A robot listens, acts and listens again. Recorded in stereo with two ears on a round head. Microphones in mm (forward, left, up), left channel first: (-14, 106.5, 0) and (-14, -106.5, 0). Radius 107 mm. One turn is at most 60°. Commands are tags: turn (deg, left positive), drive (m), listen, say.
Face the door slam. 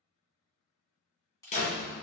<turn deg="30"/>
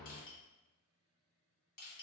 <say>Facing the door slam.</say>